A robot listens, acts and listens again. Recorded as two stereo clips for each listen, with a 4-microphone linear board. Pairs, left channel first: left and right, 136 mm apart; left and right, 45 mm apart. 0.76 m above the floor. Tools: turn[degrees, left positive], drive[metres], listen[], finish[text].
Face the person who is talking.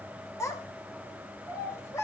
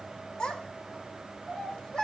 Thought: The child speaking: about 20° left or 160° left.
Action: turn[20]
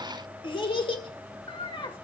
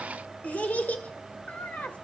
Thought: So it is at 140° left.
Action: turn[140]
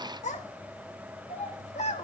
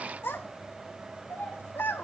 Thought: The child speaking is now 60° left.
Action: turn[60]
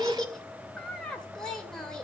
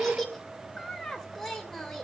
Action: finish[Facing the child speaking.]